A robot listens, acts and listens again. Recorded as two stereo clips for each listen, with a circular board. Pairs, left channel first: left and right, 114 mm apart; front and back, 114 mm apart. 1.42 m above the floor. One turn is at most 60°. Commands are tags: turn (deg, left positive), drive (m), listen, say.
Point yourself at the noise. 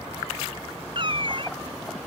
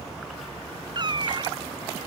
<turn deg="-60"/>
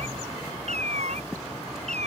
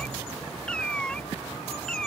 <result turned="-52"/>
<turn deg="-60"/>
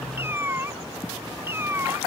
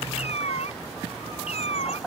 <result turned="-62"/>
<turn deg="-20"/>
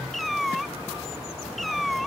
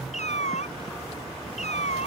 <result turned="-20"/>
<say>Found it: a cat meowing, straight ahead.</say>